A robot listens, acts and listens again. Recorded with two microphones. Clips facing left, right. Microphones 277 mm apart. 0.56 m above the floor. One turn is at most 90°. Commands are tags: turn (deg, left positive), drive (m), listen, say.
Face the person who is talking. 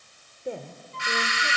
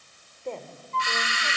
<turn deg="30"/>
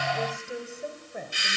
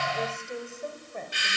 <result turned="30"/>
<turn deg="30"/>
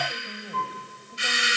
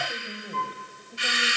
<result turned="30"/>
<turn deg="-10"/>
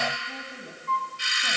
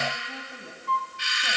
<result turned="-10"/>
<listen/>
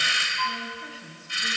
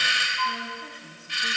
<say>Found it: a woman speaking, straight ahead.</say>